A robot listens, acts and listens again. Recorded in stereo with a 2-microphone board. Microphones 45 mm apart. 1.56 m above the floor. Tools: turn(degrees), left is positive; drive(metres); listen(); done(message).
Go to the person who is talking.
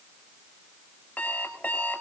listen()
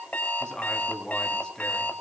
turn(degrees=20)
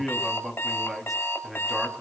drive(metres=1.0)
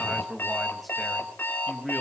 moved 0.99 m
drive(metres=1.0)
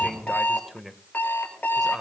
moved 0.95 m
drive(metres=1.0)
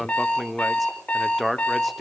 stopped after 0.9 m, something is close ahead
done("I am next to the man speaking.")